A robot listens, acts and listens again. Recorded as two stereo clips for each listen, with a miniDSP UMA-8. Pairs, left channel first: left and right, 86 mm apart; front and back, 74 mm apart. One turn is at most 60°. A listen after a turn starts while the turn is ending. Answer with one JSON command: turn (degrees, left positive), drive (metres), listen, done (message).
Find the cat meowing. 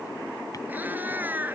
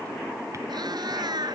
{"turn": -60}
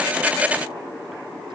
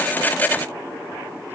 {"turn": -60}
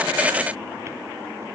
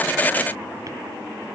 {"turn": -40}
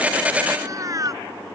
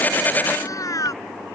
{"turn": -40}
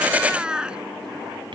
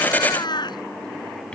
{"turn": -10}
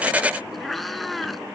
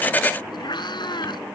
{"done": "Found it: a cat meowing, straight ahead."}